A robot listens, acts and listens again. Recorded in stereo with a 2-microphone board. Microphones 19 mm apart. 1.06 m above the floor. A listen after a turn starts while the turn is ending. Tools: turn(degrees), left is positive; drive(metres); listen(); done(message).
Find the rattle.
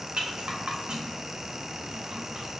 turn(degrees=-90)
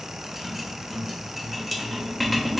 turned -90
done("Found it: a rattle, straight ahead.")